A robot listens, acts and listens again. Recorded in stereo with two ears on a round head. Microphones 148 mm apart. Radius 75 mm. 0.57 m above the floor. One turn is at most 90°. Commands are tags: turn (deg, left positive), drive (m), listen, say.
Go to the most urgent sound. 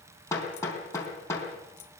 <listen/>
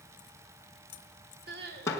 <turn deg="-70"/>
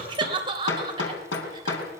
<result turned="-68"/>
<turn deg="-30"/>
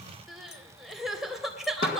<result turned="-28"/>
<drive m="1.0"/>
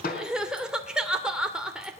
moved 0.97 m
<drive m="1.0"/>
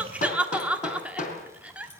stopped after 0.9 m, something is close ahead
<turn deg="-10"/>
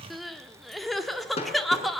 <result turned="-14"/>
<say>I am next to the crying.</say>